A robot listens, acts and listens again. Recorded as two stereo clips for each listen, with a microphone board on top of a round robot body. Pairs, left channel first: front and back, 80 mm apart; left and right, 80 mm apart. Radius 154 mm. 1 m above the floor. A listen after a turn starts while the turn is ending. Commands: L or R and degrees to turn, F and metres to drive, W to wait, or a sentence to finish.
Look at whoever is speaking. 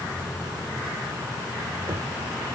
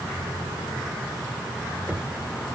W
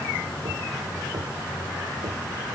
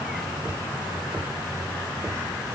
W
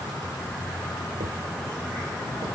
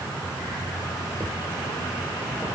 I can't make out anyone speaking to turn to.